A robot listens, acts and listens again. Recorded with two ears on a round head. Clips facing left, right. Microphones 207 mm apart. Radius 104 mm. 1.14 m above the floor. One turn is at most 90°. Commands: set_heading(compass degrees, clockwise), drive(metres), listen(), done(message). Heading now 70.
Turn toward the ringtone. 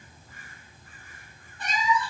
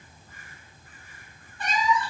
listen()
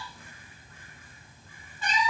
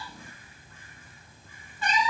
listen()
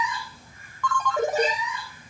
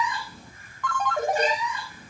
set_heading(340)
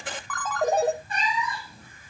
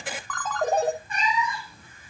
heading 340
done("Found it: a ringtone, straight ahead.")